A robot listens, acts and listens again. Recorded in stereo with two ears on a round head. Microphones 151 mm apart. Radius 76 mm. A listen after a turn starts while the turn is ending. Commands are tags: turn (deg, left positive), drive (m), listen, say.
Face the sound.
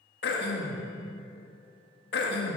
<turn deg="65"/>
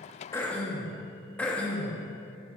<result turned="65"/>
<turn deg="10"/>
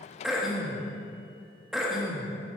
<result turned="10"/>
<say>Facing the throat clearing, 1 to 2 m away.</say>